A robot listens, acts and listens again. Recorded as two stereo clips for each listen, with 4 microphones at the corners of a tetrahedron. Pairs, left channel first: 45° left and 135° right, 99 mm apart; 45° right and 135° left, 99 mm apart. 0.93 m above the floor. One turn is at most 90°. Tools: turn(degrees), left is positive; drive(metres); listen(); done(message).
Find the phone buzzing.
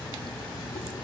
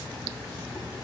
listen()
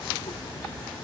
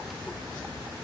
listen()
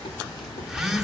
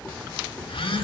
turn(degrees=-50)
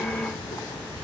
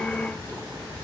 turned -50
listen()
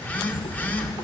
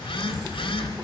turn(degrees=-25)
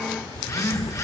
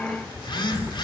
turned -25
turn(degrees=-10)
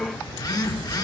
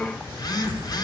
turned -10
done("Facing the phone buzzing.")